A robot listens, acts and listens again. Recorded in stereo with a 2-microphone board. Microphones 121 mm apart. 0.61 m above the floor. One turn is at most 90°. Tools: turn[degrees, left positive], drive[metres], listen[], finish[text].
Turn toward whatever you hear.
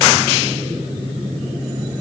Action: listen[]
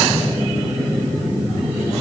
Action: listen[]
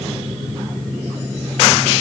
Action: finish[I can't make out anything to turn to.]